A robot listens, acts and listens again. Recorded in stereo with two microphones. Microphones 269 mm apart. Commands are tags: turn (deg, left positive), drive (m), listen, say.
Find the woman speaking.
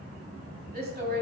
<turn deg="-40"/>
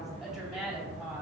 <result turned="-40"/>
<say>Found it: a woman speaking, straight ahead.</say>